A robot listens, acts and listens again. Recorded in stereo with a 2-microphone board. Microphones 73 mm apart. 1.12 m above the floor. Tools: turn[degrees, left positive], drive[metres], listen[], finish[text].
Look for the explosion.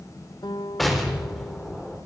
Action: turn[30]
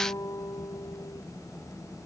Action: listen[]
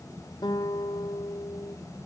Action: finish[I heard an explosion, but can't make it out now. It was about 30° right or 150° left.]